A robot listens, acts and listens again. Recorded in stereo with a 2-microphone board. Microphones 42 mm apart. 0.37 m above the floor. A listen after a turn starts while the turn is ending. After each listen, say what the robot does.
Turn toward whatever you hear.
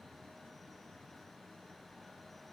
Keep listening.
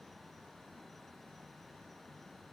Keep listening.
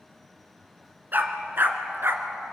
Turn 60° right.
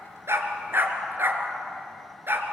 Turn 55° right.
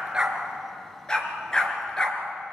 Turn 20° left.
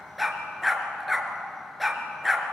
Found it: a dog barking, straight ahead, 2 to 4 m away.